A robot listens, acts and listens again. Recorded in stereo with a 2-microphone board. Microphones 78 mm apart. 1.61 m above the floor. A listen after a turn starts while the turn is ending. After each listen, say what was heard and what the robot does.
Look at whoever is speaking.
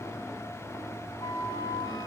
Keep listening.
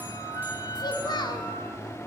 The child speaking: about 60° left or 120° left. Turn 60° left.
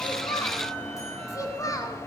So it is at 45° left. Turn 45° left.
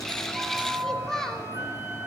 Found it: a child speaking, straight ahead.